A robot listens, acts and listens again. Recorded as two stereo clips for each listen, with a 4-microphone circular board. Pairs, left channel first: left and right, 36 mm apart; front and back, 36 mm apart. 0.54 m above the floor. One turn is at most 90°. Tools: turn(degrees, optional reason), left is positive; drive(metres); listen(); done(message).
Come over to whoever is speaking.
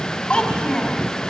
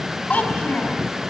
turn(degrees=30, reason="The child speaking: 30° left.")
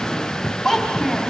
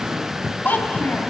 turn(degrees=10, reason="The child speaking is now 10° left.")
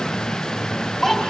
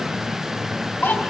drive(metres=1.0)
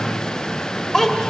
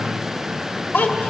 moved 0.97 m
turn(degrees=10, reason="The child speaking is now 10° left.")
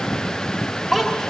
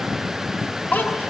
drive(metres=1.0)
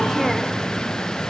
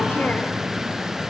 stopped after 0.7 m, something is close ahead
listen()
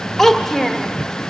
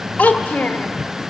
turn(degrees=10, reason="The child speaking is now 10° left.")
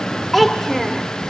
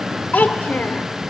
done("Arrived at the child speaking, straight ahead.")